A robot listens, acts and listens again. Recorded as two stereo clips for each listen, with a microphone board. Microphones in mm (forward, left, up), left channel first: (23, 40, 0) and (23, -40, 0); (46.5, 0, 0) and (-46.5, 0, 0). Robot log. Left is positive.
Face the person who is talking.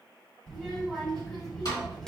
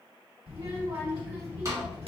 note: The child speaking: 175° left.
cmd yaw +175
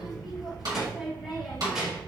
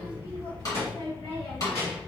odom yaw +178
end: Facing the child speaking.